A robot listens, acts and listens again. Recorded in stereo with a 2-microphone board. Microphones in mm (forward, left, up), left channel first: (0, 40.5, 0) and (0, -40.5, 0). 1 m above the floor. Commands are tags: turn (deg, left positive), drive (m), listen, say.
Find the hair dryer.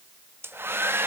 <turn deg="-25"/>
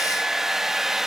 <say>Facing the hair dryer.</say>